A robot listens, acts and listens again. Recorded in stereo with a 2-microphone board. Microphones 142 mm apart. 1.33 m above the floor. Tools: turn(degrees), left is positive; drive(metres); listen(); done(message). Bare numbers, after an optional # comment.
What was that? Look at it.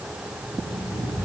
# The alarm clock: about 25° left or 155° left.
turn(25)
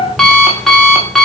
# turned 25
done("Facing the alarm clock.")